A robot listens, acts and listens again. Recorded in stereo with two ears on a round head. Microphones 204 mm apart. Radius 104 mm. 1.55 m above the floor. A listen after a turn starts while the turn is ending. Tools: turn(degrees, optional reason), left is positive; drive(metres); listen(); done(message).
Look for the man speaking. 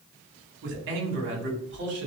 turn(degrees=-55, reason="The man speaking: about 55° right or 125° right.")
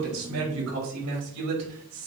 turn(degrees=-75, reason="So it is at 75° right.")
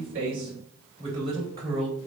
turn(degrees=-25, reason="The man speaking is now 25° right.")
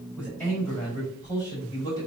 turn(degrees=15, reason="The man speaking is now 15° left.")
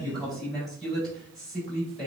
done("Found it: a man speaking, straight ahead.")